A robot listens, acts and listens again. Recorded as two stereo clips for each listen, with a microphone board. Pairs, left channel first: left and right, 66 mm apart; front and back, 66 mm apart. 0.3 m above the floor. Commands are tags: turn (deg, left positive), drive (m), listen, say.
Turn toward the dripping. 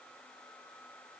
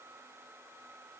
<listen/>
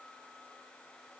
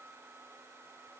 <listen/>
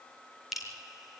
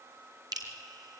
<turn deg="-175"/>
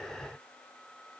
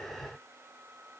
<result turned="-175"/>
<listen/>
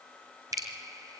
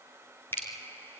<turn deg="-60"/>
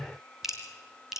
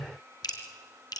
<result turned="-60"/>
<say>Found it: dripping, straight ahead, 2 to 4 m away.</say>